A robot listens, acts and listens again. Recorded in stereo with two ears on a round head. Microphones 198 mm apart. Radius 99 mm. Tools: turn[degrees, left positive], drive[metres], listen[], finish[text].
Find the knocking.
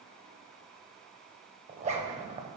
Action: listen[]
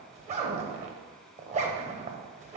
Action: listen[]
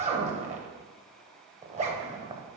Action: finish[I can't make out knocking to turn to.]